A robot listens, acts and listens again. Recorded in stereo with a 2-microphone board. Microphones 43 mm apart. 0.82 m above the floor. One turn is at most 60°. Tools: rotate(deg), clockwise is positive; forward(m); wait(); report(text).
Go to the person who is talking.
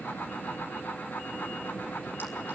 wait()
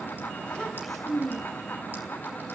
rotate(-30)
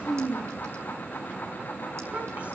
rotate(35)
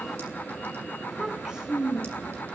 rotate(20)
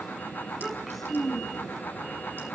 forward(1.0)
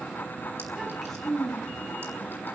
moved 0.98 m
forward(1.0)
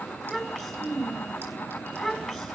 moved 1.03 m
forward(1.0)
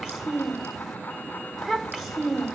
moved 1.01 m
forward(1.0)
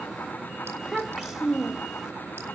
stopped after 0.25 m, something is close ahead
rotate(10)
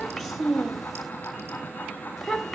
report("I am next to the child speaking.")